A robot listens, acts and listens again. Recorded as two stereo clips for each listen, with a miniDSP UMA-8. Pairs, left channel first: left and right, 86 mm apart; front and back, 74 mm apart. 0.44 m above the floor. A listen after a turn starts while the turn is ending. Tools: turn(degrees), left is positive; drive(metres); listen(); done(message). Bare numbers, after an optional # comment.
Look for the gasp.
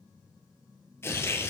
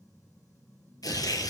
listen()
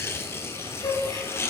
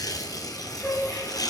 # The gasp: 90° left.
turn(90)
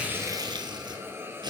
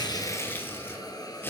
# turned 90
done("Facing where the gasp came from. I can't hear it now.")